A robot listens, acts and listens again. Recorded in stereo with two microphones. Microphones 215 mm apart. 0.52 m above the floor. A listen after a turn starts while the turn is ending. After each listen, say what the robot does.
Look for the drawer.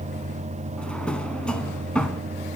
Turn 30° left.
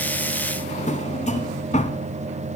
Turn 145° left.
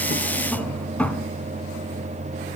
Facing the drawer, 1 to 2 m away.